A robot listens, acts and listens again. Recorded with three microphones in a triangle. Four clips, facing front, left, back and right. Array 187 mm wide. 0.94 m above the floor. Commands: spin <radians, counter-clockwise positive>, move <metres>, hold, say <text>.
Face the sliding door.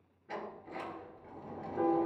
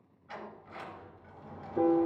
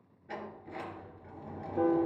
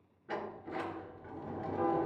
spin -1.48
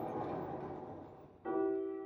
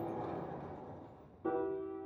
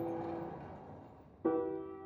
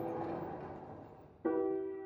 spin -0.17
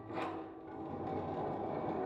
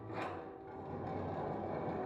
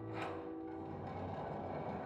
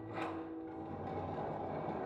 say Facing the sliding door, 2 to 4 m away.